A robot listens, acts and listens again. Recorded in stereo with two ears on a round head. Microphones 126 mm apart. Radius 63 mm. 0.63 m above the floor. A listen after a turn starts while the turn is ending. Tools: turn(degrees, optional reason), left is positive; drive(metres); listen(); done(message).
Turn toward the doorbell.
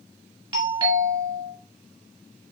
turn(degrees=-35, reason="The doorbell: about 35° right or 145° right.")
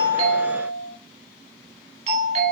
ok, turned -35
turn(degrees=-105, reason="So it is at 105° right.")
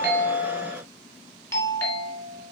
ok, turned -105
turn(degrees=25, reason="The doorbell is now 25° left.")
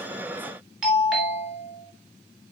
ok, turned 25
done("Facing the doorbell.")